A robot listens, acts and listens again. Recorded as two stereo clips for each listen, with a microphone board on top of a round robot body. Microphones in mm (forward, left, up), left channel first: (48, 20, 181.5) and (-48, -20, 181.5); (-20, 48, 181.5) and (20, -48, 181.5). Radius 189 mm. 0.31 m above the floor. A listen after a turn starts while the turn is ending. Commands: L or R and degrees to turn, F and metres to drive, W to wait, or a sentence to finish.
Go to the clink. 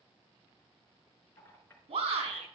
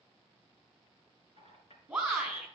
L90
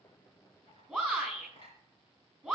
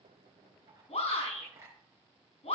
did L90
R10
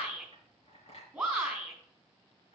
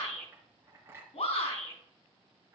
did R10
F1.0
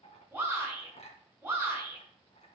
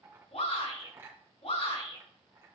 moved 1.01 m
F1.0
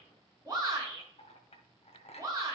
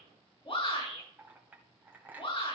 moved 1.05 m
F1.0
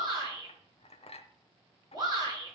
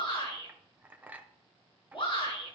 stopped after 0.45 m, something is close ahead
L10
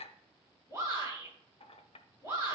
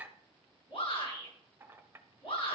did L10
I am next to the clink.